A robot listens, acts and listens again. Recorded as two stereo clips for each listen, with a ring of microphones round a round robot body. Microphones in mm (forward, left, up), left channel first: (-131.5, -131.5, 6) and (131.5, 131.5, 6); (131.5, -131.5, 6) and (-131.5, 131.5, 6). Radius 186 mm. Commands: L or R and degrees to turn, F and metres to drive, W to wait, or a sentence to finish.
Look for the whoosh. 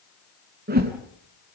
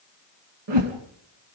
L110
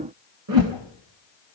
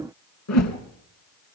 Found it: a whoosh, straight ahead, 2 to 4 m away.